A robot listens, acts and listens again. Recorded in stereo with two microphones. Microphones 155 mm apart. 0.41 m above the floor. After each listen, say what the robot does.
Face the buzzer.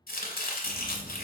Turn 30° left.
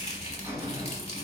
Turn 20° right.
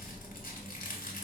Facing the buzzer, 1 to 2 m away.